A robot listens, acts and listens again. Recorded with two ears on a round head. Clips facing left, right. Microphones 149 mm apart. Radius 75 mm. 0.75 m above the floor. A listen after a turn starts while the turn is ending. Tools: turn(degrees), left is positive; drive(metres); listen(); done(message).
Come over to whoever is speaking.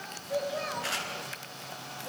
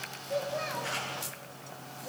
turn(degrees=30)
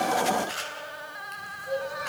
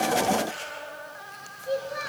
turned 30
turn(degrees=-30)
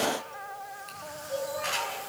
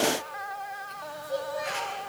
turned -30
turn(degrees=-15)
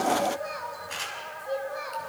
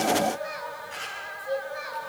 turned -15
drive(metres=1.0)
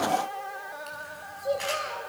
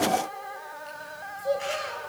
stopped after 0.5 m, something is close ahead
done("Something is in my way. I am facing the child speaking but have not reached it.")